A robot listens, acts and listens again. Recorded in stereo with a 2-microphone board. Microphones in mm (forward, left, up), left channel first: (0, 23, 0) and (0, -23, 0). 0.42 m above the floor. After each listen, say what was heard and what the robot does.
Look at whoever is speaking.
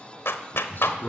The man speaking: about 50° left or 130° left. Turn 50° left.
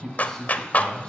So it is at 10° left. Turn 10° left.
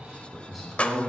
Facing the man speaking.